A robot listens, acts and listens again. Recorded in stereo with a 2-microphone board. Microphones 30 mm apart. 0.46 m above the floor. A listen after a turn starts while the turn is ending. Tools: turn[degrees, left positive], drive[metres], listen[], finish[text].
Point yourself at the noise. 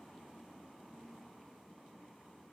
Action: listen[]
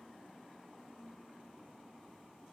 Action: listen[]
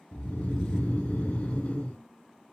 Thought: The snoring: about 55° left or 125° left.
Action: turn[55]
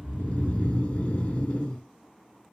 Thought: So it is at 50° left.
Action: turn[50]
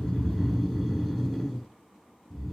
Action: finish[Found it: snoring, straight ahead.]